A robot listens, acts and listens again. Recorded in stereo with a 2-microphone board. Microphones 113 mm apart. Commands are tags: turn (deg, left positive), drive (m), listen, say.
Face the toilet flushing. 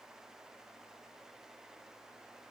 <listen/>
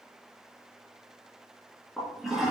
<turn deg="-30"/>
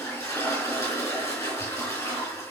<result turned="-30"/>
<turn deg="25"/>
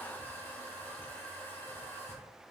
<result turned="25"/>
<turn deg="20"/>
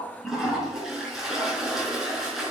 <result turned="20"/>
<say>Found it: a toilet flushing, straight ahead.</say>